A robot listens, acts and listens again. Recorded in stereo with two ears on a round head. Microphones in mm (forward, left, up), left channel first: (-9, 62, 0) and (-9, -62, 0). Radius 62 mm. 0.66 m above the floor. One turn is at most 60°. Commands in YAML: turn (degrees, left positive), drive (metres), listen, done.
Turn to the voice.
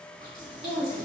turn: -60
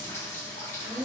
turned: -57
turn: -35
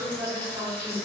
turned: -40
done: "Found it: a woman speaking, straight ahead, 1 to 2 m away."